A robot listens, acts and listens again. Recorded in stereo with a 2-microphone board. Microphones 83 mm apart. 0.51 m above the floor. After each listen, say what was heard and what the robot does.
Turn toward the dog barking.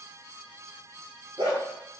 Turn 90° right.
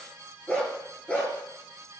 So it is at 15° left. Turn 15° left.
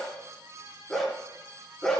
The dog barking is now 10° left. Turn 10° left.
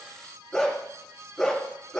Found it: a dog barking, straight ahead, 2 to 4 m away.